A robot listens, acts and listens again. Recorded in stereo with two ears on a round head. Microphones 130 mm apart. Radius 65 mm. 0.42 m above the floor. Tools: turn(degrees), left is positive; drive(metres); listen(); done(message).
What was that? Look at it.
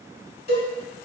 turn(degrees=45)
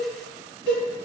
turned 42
done("Facing the cowbell, 1 to 2 m away.")